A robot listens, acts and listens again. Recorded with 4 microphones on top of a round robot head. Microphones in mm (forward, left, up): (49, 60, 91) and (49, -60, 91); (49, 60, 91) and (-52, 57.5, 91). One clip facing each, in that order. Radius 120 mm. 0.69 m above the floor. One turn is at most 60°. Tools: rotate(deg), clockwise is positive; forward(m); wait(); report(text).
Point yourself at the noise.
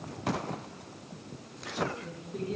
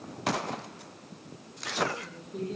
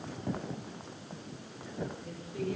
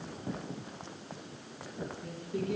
rotate(60)
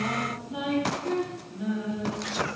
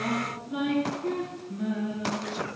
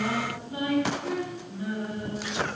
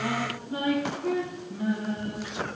rotate(60)
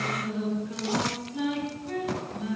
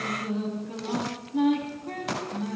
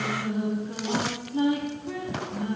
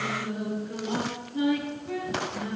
rotate(55)
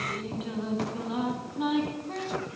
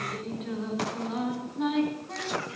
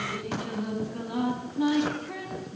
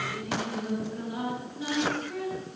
rotate(-10)
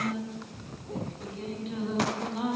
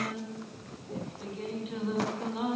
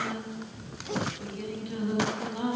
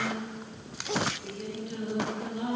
report("Facing the singing.")